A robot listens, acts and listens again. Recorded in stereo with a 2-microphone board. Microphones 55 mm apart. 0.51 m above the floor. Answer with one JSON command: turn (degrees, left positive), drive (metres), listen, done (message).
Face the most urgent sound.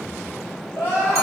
{"turn": 55}
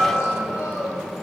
{"turn": 70}
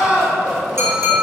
{"turn": -15}
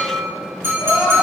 {"turn": -10}
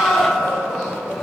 {"done": "Found it: crying, straight ahead, 1 to 2 m away."}